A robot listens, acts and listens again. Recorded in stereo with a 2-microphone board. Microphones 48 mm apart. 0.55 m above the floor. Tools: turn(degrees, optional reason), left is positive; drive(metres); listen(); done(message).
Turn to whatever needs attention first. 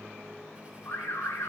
turn(degrees=70, reason="The alarm: about 70° left or 110° left.")
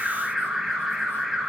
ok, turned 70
done("Found it: an alarm, straight ahead.")